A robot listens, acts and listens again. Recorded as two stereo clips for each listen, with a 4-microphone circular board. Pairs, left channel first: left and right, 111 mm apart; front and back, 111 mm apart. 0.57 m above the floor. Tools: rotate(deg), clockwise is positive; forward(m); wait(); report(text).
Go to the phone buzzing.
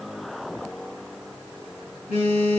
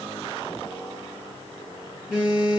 rotate(-95)
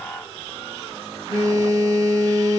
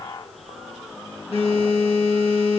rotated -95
rotate(35)
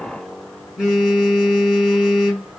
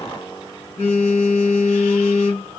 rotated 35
rotate(10)
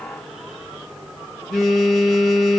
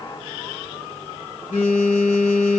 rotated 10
forward(1.0)
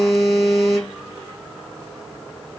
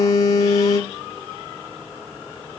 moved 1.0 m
forward(1.0)
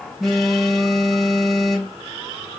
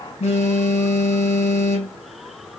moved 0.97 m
forward(1.0)
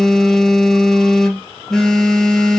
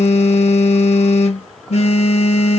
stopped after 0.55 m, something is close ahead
report("Arrived at the phone buzzing, straight ahead.")